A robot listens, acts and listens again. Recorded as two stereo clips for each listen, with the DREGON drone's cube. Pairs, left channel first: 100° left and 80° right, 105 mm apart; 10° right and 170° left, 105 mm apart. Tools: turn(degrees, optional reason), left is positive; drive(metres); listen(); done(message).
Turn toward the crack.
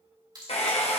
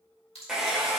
turn(degrees=-30, reason="The crack: 30° right.")
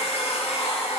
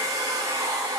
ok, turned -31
done("I heard a crack from this way, but can't make it out now.")